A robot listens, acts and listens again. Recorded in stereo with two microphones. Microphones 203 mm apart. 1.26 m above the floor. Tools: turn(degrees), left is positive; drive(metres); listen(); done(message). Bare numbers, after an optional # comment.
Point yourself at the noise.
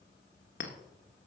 # The clink: about 60° left or 120° left.
turn(60)
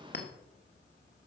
# So it is at 55° left.
turn(55)
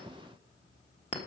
# The clink is now 25° left.
turn(25)
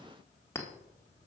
# The clink is now 15° left.
turn(15)
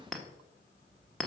done("Facing the clink.")